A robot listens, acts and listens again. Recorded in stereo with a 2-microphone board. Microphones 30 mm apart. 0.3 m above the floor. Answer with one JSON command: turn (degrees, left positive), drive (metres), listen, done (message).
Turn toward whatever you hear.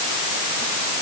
{"listen": true}
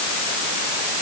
{"listen": true}
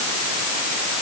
{"done": "I can't make out anything to turn to."}